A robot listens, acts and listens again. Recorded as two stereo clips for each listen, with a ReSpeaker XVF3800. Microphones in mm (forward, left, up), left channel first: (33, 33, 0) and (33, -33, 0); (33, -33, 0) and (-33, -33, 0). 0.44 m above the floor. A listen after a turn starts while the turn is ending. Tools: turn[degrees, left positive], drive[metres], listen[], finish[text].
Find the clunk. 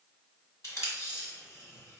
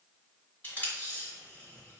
Action: listen[]
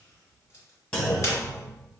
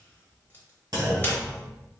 Thought: The clunk: 160° left.
Action: turn[160]
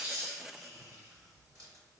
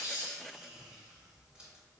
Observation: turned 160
Action: finish[Facing where the clunk came from. I can't hear it now.]